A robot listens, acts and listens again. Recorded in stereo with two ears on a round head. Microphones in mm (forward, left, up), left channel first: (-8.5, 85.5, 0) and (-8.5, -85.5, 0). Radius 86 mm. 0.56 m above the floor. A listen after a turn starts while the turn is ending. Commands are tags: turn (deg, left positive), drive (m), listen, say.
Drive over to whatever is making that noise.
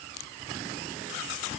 <listen/>
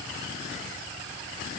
<listen/>
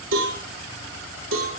<turn deg="-90"/>
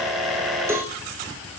<turn deg="-15"/>
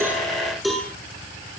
<drive m="1.0"/>
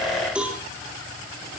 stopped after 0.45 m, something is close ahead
<say>Something is in my way. I am facing the cowbell but have not reached it.</say>